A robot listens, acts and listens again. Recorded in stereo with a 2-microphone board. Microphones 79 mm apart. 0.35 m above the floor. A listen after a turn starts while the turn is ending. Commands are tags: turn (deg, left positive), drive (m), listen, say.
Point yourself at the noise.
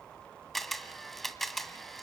<turn deg="30"/>
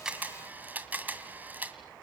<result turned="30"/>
<turn deg="-25"/>
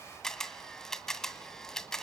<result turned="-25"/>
<say>Facing the camera shutter.</say>